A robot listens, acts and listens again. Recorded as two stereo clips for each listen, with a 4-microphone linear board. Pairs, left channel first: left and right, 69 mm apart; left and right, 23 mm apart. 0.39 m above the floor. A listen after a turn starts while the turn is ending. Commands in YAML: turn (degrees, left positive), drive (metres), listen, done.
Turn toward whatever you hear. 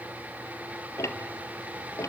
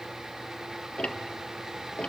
turn: 45
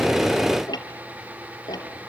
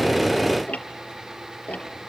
turn: 95
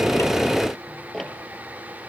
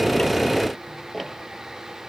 done: "Facing the ticking, 1 to 2 m away."